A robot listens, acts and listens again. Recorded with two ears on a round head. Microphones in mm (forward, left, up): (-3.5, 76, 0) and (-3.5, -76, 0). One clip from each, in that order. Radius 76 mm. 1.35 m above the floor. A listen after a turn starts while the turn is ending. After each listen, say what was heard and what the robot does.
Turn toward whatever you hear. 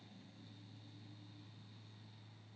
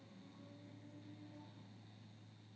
Keep listening.
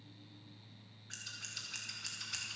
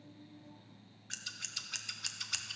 The scissors: about 35° right or 145° right. Turn 35° right.
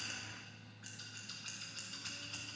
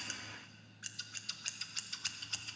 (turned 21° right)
So it is at 120° right. Turn 120° right.
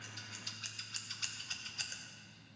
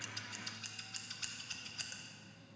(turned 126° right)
Facing the scissors.